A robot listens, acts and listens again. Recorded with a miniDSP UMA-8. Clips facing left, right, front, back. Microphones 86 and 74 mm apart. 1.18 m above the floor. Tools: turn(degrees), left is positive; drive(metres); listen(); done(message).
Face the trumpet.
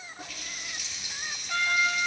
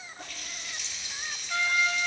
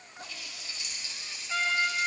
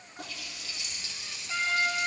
turn(degrees=115)
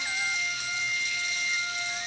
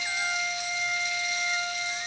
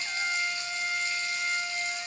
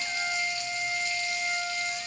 done("Facing the trumpet, 2 to 4 m away.")